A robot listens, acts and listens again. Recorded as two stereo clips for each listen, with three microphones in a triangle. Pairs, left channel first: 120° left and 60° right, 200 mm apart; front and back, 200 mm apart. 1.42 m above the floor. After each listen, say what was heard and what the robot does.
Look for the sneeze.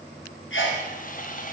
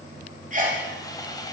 The sneeze: 130° left. Turn 130° left.
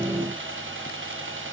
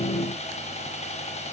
I heard a sneeze from this way, but can't make it out now.